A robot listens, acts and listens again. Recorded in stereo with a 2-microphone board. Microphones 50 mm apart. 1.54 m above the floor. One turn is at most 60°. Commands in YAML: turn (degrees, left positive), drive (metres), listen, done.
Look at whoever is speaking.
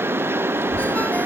turn: -55
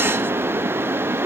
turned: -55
listen: true
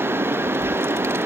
turn: -60
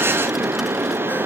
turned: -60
listen: true
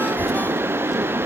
turn: -10
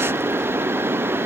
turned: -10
listen: true
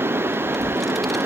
done: "Facing the child speaking."